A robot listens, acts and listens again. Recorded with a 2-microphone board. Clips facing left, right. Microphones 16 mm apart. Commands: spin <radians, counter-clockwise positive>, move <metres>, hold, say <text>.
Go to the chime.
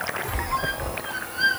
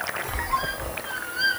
spin 0.52
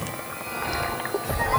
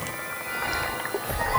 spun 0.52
spin -0.26
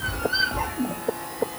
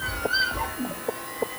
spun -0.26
move 1.0
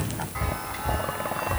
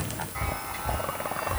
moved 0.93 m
move 1.0
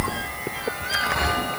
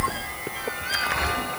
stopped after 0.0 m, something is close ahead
say I am next to the chime.